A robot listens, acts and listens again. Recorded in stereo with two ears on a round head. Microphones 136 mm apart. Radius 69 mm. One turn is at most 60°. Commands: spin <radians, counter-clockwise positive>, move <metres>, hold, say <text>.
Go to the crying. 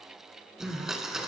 spin 0.52
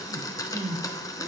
spin -0.44
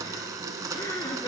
spin 0.44
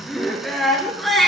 move 1.0
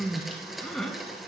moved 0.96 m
move 1.0
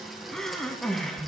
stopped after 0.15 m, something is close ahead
say I am next to the crying.